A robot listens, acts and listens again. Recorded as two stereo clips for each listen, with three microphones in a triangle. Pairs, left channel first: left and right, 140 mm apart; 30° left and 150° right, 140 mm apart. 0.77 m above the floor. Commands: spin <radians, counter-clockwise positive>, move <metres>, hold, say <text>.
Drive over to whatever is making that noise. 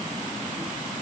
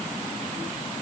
hold
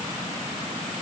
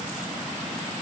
hold
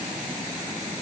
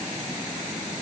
say I can't make out anything.